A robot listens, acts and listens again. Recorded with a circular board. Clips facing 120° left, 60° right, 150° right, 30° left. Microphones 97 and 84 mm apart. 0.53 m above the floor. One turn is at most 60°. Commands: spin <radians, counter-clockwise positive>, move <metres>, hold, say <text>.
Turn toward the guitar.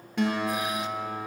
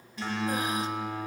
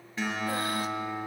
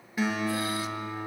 spin 1.05
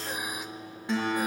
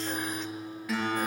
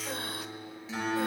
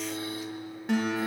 spin 1.05
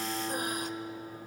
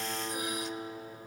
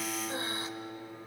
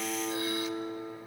spin 0.26
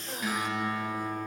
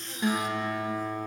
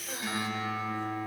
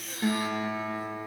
say Facing the guitar.